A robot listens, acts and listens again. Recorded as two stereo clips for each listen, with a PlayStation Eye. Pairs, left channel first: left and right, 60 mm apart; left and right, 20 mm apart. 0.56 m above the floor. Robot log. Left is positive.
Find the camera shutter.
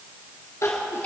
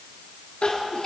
cmd idle
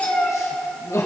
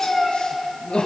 cmd idle
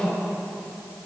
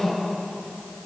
end: I can't make out a camera shutter to turn to.